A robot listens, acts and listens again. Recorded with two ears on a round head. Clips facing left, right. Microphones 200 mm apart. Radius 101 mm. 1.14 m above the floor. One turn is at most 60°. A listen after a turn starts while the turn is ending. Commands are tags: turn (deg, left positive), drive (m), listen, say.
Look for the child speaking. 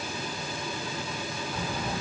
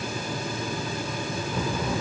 <turn deg="-60"/>
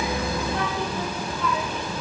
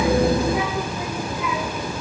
<turn deg="-10"/>
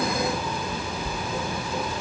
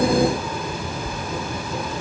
<say>Found it: a child speaking, straight ahead.</say>